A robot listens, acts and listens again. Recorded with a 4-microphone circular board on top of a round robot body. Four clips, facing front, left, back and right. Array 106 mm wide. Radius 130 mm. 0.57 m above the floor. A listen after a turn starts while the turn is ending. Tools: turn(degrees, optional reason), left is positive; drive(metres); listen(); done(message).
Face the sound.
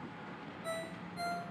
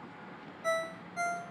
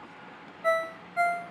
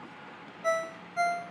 turn(degrees=-160, reason="The ringtone: 160° right.")
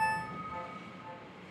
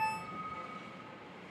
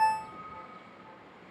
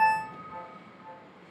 listen()
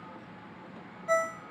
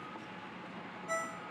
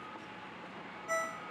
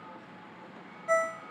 turn(degrees=-50, reason="The ringtone is now 50° right.")
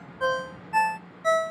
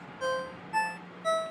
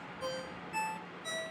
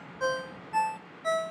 done("Facing the ringtone, under 1 m away.")